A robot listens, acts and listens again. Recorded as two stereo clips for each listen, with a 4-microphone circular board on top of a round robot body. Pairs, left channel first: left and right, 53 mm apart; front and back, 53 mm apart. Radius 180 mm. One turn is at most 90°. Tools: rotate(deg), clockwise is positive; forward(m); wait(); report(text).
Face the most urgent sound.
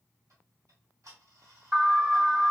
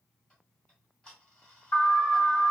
rotate(30)
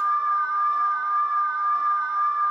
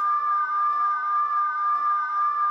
report("Found it: an alarm, straight ahead, 2 to 4 m away.")